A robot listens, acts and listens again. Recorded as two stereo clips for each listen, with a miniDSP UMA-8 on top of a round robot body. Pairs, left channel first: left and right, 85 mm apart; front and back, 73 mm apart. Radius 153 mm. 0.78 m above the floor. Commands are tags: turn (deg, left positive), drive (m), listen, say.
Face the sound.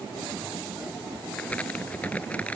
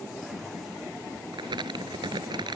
<turn deg="165"/>
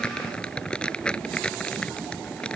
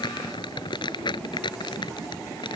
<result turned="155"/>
<turn deg="10"/>
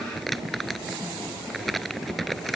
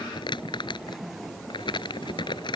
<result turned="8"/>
<say>Facing the crumpling.</say>